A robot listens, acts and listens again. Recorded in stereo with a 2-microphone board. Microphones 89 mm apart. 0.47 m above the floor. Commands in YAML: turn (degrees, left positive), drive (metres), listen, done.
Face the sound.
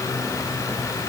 listen: true
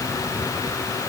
listen: true
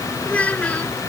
turn: 30
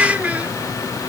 turn: -15
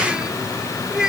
done: "Facing the child speaking."